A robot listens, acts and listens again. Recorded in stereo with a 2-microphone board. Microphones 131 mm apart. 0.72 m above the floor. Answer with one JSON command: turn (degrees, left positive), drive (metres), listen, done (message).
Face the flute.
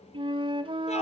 {"turn": -40}
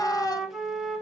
{"done": "Facing the flute, 1 to 2 m away."}